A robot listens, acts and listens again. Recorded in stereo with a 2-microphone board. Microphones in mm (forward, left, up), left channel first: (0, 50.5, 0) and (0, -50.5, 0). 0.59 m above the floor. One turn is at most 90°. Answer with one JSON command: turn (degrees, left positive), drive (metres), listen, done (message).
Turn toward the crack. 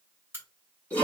{"turn": -25}
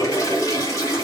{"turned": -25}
{"listen": true}
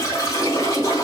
{"done": "I heard a crack, but can't make it out now. It was about straight ahead or 130° right."}